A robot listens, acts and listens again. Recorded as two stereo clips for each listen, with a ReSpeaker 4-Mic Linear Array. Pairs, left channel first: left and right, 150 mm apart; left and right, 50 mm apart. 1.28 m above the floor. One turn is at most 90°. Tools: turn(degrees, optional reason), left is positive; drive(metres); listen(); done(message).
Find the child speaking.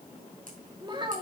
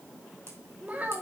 turn(degrees=-35, reason="The child speaking: about 35° right or 145° right.")
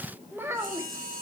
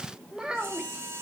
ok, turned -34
turn(degrees=-20, reason="So it is at 20° right.")
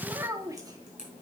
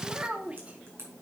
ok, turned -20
turn(degrees=-25, reason="The child speaking is now 25° right.")
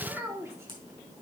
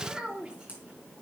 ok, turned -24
turn(degrees=-15, reason="The child speaking is now 15° right.")
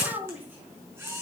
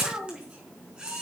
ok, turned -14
turn(degrees=-10, reason="The child speaking is now 10° right.")
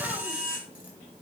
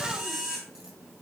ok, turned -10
listen()
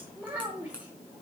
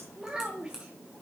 turn(degrees=-10, reason="The child speaking is now 10° right.")
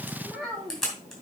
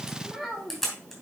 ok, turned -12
done("Found it: a child speaking, straight ahead, 2 to 4 m away.")